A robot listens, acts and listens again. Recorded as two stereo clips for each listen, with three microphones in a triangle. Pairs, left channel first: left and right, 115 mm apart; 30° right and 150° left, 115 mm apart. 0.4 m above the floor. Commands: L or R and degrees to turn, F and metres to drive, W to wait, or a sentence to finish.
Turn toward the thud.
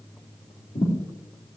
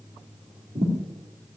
L120
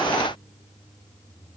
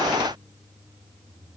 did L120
Facing where the thud came from. I can't hear it now.